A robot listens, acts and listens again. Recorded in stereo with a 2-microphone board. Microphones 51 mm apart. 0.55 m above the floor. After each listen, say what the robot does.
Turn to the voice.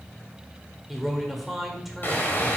Turn 30° right.
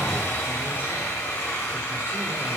Keep listening.
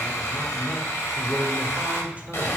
Turn 145° right.
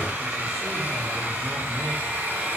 Keep listening.
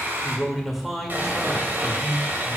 Found it: a man speaking, straight ahead.